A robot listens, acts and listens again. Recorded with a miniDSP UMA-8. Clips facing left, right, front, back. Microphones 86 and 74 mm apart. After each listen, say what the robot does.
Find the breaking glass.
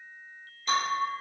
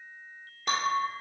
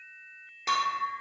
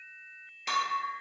Turn 65° right.
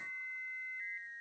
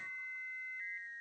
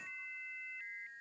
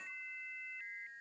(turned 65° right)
I heard breaking glass from this way, but can't make it out now.